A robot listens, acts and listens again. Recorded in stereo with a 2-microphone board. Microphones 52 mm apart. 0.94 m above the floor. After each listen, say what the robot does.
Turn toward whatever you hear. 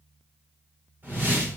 Turn 35° right.
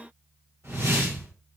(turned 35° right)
Turn 105° right.
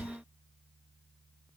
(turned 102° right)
Keep listening.
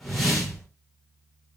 Found it: a whoosh, straight ahead, 1 to 2 m away.